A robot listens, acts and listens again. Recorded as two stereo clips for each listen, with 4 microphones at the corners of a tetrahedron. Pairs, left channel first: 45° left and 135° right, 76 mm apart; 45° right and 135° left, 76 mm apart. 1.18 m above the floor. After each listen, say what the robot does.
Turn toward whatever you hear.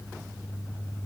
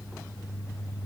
Keep listening.
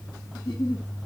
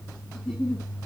Turn 35° left.
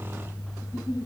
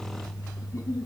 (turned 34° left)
Found it: a giggle, straight ahead, 1 to 2 m away.